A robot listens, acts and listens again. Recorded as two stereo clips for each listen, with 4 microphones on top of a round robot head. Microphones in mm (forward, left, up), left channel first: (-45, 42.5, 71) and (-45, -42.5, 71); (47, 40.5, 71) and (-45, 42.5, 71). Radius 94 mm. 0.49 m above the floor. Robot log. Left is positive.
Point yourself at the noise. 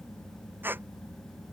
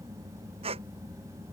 note: The squeak: 155° right.
cmd yaw -155
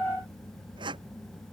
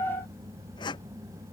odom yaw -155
note: The squeak is now 50° right.
cmd yaw -50
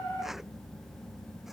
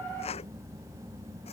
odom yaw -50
end: Found it: a squeak, straight ahead.